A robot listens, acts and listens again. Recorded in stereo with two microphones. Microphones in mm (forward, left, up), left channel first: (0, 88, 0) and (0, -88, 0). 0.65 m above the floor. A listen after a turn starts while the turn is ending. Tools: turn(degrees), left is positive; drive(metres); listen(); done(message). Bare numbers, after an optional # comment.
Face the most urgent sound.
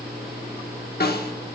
listen()
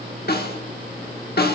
listen()
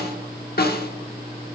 done("I can't make out anything urgent to turn to.")